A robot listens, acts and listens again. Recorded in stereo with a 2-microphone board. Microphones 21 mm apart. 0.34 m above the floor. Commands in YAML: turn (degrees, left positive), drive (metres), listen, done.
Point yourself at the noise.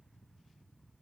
listen: true
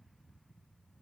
listen: true
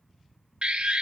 turn: -65
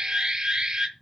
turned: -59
turn: -45
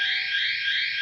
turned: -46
done: "Found it: an alarm, straight ahead, 1 to 2 m away."